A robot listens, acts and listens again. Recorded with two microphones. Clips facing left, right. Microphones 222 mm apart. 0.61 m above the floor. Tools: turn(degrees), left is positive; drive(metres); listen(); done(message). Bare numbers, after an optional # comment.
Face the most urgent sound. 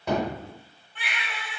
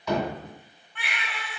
# The baby crying: about 30° left or 150° left.
turn(30)
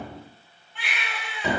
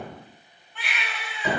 done("Found it: a baby crying, straight ahead.")